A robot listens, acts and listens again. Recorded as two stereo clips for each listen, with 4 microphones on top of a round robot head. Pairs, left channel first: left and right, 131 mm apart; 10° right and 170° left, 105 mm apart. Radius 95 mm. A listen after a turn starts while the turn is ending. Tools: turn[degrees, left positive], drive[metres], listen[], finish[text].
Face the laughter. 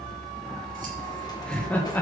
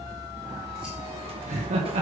Thought: The laughter: 165° left.
Action: turn[165]
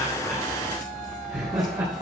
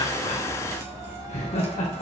Thought: The laughter is now 20° right.
Action: turn[-20]
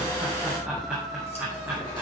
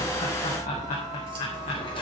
Thought: The laughter is now 15° right.
Action: turn[-15]
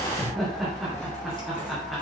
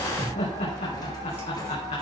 Action: finish[Found it: laughter, straight ahead, 2 to 4 m away.]